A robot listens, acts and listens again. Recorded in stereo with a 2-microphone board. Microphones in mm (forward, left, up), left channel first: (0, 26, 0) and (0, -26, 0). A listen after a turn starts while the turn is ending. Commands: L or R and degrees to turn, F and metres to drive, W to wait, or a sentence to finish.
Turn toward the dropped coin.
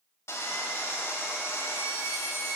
W
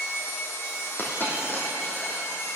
L40
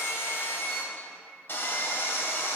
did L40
W
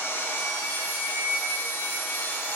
I heard a dropped coin, but can't make it out now. It was about straight ahead or 100° left.